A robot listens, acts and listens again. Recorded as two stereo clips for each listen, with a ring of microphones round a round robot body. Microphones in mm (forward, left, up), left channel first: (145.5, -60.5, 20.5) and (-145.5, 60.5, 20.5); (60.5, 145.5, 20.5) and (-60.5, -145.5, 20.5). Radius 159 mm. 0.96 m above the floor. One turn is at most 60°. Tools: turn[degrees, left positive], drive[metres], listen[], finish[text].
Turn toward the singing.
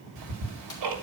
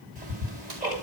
Action: listen[]
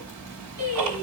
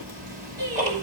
Thought: The singing: 135° right.
Action: turn[-60]
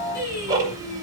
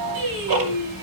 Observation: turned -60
Thought: The singing is now 80° right.
Action: turn[-60]
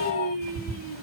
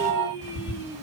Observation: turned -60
Thought: The singing is now 30° right.
Action: turn[-30]
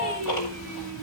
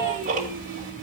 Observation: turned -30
Action: listen[]
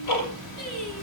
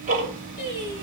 Action: finish[Facing the singing.]